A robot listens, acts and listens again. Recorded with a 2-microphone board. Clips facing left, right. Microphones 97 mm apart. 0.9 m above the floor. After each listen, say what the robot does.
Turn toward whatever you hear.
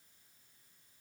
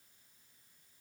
Keep listening.
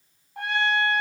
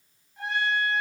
Turn 75° left.
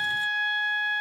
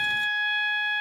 Turn 30° left.
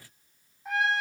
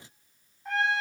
Facing the trumpet, 2 to 4 m away.